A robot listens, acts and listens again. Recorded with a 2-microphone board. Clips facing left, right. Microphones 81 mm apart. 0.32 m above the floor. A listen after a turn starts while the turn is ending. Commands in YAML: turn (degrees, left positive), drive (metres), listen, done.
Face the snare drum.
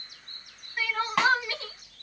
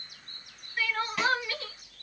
turn: 70
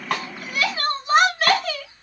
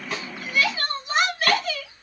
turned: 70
listen: true
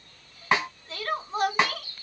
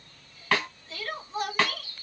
turn: 25
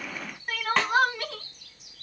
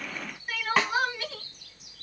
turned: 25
done: "Found it: a snare drum, straight ahead, 1 to 2 m away."